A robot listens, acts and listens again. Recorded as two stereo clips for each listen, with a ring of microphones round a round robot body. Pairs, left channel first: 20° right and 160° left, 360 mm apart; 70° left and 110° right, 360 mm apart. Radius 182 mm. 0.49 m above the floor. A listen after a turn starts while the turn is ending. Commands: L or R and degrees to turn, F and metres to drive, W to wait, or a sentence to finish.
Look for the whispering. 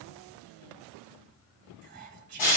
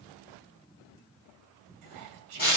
R140
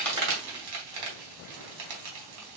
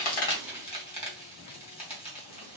W
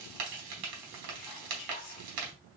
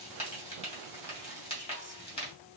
W
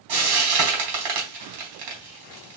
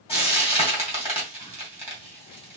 I heard whispering from this way, but can't make it out now.